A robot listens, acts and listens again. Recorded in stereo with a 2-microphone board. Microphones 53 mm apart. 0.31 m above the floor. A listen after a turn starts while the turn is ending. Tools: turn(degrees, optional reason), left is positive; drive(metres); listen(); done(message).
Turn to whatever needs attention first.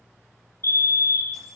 turn(degrees=55, reason="The fire alarm: about 55° left or 125° left.")
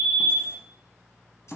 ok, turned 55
listen()
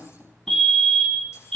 turn(degrees=10, reason="So it is at 10° left.")
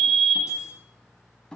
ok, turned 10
done("Facing the fire alarm.")